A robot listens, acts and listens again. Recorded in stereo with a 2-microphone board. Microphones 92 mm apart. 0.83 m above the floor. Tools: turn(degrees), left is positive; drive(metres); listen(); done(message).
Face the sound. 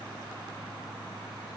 listen()
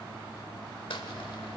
turn(degrees=65)
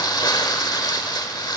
turn(degrees=50)
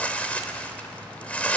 turn(degrees=15)
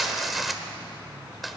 done("Found it: crumpling, straight ahead, 1 to 2 m away.")